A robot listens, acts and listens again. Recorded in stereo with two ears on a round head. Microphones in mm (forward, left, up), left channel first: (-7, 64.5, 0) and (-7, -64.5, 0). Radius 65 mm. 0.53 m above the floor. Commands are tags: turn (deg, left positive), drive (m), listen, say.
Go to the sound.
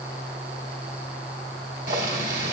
<turn deg="-65"/>
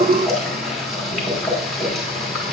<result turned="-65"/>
<drive m="1.0"/>
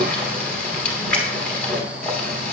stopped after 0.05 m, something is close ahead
<turn deg="10"/>
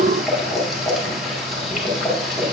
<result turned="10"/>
<say>Something is in my way. I am facing the boiling but have not reached it.</say>